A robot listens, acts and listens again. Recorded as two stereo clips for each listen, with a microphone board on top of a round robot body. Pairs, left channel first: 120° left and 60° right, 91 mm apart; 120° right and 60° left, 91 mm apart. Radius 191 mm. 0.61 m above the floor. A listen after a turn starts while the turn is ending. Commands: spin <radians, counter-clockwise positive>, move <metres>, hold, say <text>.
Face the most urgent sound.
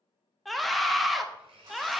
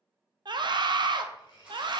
spin 0.52
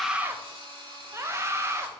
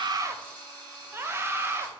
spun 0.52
say Facing the scream.